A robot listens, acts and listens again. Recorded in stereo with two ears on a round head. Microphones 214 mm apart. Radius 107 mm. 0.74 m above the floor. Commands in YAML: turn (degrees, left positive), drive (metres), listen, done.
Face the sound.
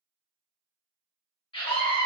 turn: 20
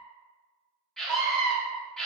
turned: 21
done: "Found it: a scream, straight ahead."